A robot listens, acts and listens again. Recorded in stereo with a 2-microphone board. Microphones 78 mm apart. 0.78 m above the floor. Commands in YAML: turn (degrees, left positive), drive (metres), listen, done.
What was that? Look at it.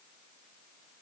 listen: true
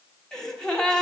turn: 30
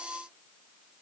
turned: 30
listen: true
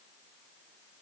done: "I heard a gasp, but can't make it out now. It was about 20° right or 140° left."